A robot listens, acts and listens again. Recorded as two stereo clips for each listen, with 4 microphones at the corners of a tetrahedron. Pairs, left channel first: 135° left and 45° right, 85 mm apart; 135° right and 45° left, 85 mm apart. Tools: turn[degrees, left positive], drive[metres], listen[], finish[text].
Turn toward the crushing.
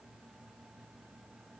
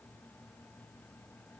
Action: listen[]
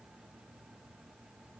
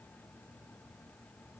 Action: listen[]
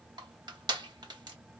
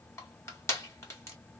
Thought: The crushing: 75° right.
Action: turn[-75]
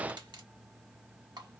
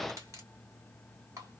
Action: listen[]
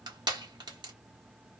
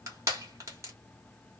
Thought: The crushing is now 10° right.
Action: turn[-10]
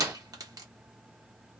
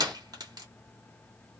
Action: finish[Facing the crushing.]